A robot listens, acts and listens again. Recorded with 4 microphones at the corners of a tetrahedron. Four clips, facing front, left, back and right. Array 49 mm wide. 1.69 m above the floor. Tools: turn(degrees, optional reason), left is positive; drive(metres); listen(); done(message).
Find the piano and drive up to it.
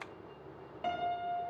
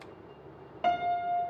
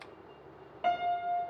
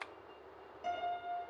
turn(degrees=110, reason="The piano: 110° left.")
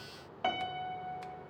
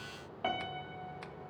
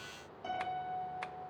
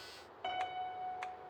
turn(degrees=20, reason="The piano is now 20° left.")
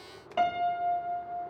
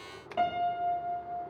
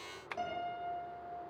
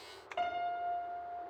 drive(metres=1.0)
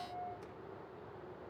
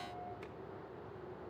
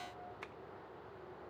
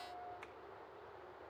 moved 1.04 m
turn(degrees=10, reason="The piano is now 10° left.")
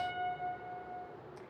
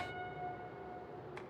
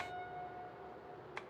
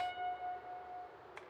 drive(metres=1.0)
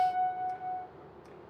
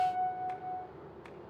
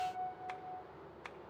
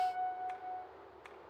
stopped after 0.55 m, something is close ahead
done("Blocked. The piano is further on, straight ahead.")